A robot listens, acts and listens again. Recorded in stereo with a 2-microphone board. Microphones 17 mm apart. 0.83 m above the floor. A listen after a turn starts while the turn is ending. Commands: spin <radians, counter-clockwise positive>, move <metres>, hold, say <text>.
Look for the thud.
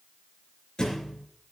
spin 0.87
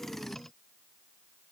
hold
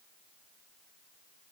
say I heard a thud, but can't make it out now. It was about straight ahead or 80° left.